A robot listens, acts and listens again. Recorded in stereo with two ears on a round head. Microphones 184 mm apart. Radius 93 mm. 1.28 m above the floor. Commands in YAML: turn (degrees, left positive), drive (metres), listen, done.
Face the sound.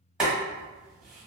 turn: -30
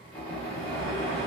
turn: 25
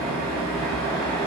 turn: 15
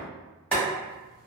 done: "Found it: boiling, straight ahead."